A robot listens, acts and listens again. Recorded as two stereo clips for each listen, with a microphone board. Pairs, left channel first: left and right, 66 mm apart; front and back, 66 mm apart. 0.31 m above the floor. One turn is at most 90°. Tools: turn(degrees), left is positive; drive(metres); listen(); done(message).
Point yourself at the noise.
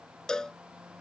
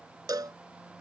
turn(degrees=90)
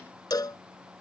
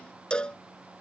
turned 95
turn(degrees=75)
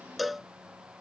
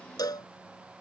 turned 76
done("Found it: a cowbell, straight ahead.")